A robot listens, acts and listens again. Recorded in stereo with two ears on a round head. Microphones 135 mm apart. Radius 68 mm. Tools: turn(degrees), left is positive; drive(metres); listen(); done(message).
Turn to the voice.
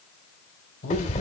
turn(degrees=60)
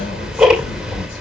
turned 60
listen()
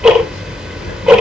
listen()
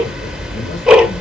done("I heard a man speaking, but can't make it out now. It was about straight ahead or 60° left.")